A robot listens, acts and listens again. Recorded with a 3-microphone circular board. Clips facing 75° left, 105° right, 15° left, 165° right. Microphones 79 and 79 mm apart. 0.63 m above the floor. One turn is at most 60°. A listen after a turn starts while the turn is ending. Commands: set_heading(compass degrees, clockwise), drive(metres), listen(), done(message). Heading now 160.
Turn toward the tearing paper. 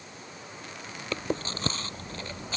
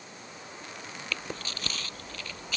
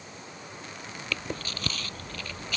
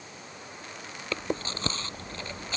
listen()
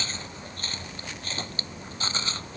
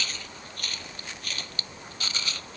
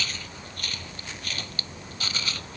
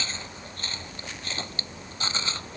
listen()
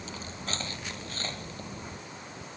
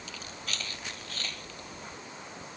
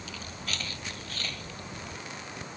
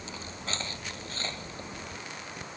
done("I can't make out tearing paper to turn to.")